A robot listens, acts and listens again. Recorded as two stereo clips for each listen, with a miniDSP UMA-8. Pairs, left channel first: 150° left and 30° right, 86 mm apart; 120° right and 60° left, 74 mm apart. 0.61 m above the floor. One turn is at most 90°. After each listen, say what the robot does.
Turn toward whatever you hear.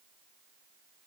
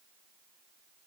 Keep listening.
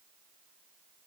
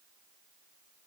Keep listening.
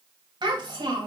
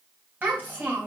Facing the child speaking.